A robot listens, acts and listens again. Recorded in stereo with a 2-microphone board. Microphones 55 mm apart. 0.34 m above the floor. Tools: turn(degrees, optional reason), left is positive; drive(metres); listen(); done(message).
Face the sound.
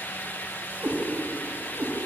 turn(degrees=-55, reason="The cat meowing: about 55° right or 125° right.")
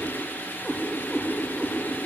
done("Found it: a cat meowing, straight ahead, over 4 m away.")